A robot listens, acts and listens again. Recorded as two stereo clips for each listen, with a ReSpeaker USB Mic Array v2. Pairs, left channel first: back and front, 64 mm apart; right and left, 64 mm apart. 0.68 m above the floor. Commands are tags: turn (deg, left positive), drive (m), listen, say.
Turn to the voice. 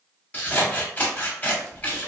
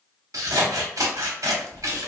<listen/>
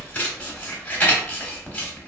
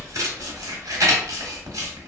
<listen/>
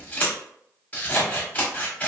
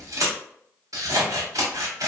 <say>I can't make out anyone speaking, only scissors.</say>